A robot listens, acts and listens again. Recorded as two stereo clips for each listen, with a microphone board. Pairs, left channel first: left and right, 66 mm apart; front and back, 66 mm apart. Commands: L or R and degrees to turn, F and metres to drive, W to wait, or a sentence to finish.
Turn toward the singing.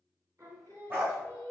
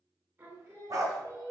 R135
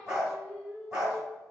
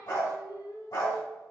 Facing the singing.